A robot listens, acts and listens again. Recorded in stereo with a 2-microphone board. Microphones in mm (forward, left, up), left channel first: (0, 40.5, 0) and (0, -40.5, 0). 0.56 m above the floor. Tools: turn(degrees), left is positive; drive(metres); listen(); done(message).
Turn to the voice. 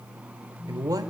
turn(degrees=-50)
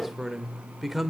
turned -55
done("Facing the man speaking.")